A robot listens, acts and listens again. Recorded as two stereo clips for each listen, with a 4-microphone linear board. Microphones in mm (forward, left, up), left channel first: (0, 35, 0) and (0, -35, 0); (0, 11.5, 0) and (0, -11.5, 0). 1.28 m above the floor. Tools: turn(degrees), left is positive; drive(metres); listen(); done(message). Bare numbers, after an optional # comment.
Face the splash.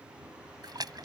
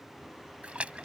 # The splash: about 70° right or 110° right.
turn(-70)
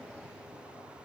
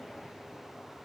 listen()
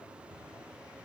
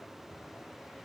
done("I heard a splash, but can't make it out now. It was about straight ahead or 40° right.")